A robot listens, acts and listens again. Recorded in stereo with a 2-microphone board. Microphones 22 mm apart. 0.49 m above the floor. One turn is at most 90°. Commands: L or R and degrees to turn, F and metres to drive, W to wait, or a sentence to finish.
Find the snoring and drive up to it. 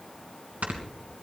R90
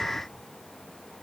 W
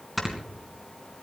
F1.0
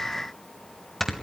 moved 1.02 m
L10
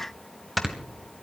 F1.0
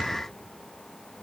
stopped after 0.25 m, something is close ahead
W
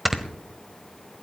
I am next to the snoring.